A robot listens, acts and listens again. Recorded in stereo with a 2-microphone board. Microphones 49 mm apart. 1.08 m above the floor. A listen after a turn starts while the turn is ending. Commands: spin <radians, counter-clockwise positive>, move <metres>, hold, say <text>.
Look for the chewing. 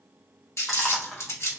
spin 0.52
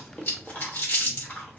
spin 2.53
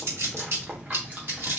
spin -0.52
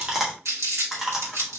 spin -0.17
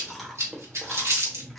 say Found it: chewing, straight ahead, 1 to 2 m away.